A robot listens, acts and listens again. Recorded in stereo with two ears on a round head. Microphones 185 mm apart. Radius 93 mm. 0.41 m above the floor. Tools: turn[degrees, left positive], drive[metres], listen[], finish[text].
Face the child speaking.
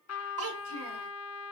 Thought: The child speaking: about 70° right or 110° right.
Action: turn[-70]
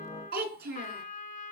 Thought: So it is at 45° right.
Action: turn[-45]
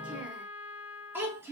Thought: The child speaking is now 10° right.
Action: turn[-10]
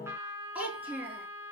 Thought: The child speaking is now 10° right.
Action: turn[-10]
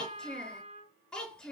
Action: finish[Found it: a child speaking, straight ahead, over 4 m away.]